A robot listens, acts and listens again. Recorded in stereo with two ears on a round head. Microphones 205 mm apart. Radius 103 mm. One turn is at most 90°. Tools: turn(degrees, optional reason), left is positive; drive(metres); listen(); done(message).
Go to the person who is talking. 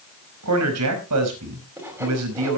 turn(degrees=-90)
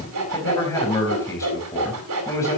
turn(degrees=15, reason="So it is at 15° left.")
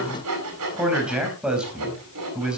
drive(metres=1.0)
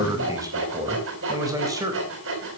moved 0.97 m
turn(degrees=-15, reason="The man speaking is now 15° right.")
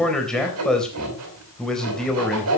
drive(metres=1.0)
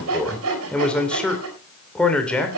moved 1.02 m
drive(metres=1.0)
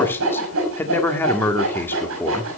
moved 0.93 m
turn(degrees=10, reason="The man speaking is now 10° left.")
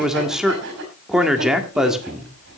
drive(metres=1.0)
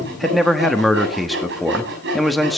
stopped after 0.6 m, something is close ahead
done("Arrived at the man speaking, straight ahead.")